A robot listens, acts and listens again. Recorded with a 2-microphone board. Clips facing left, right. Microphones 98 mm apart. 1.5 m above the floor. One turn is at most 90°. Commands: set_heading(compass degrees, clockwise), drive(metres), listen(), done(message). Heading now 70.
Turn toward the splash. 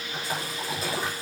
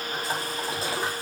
set_heading(100)
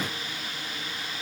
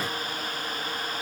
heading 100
listen()
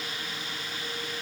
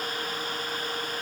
done("I heard a splash, but can't make it out now. It was about straight ahead or 120° right.")